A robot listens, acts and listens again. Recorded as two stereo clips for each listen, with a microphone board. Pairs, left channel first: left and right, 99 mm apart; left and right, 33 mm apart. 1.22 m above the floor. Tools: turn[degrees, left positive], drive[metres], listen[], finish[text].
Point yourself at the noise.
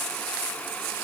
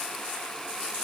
Action: listen[]
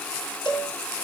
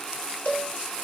Thought: The cowbell: about 50° left or 130° left.
Action: turn[50]
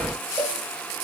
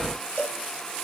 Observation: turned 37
Thought: So it is at 95° left.
Action: turn[95]
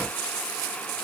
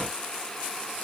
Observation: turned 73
Thought: Nothing new. It was at 20° left.
Action: turn[20]
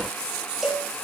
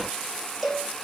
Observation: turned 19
Action: finish[Found it: a cowbell, straight ahead.]